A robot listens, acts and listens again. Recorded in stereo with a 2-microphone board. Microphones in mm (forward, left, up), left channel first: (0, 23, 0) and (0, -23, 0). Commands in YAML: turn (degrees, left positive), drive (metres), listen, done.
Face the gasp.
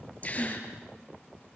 turn: 35
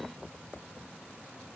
listen: true
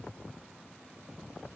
done: "I heard a gasp, but can't make it out now. It was about straight ahead or 110° left."